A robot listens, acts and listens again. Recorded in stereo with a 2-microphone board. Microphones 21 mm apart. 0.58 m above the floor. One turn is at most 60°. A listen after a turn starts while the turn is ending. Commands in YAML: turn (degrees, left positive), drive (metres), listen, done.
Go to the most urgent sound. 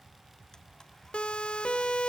turn: 60
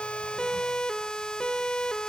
turn: 40
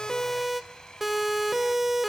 turn: -15
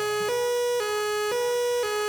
drive: 1.0
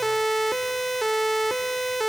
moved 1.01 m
drive: 1.0
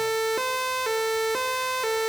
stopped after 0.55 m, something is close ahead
done: "Arrived at the siren, straight ahead."